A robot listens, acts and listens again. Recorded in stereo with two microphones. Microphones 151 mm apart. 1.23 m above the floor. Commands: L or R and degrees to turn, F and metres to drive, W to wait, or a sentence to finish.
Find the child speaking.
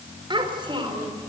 R35
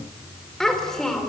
Facing the child speaking, 2 to 4 m away.